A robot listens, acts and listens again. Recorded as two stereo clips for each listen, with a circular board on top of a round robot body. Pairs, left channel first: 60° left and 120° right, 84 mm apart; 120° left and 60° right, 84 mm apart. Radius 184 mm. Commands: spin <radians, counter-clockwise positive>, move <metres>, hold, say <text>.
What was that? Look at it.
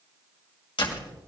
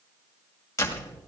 spin 1.13
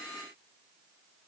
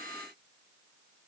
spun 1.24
say Facing where the door slam came from. I can't hear it now.